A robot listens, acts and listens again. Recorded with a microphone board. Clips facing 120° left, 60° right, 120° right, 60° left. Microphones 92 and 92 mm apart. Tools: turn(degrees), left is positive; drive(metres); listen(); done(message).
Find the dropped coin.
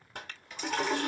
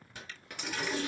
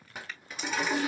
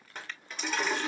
turn(degrees=-35)
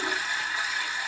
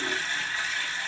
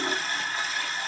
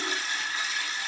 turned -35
done("I heard a dropped coin from this way, but can't make it out now.")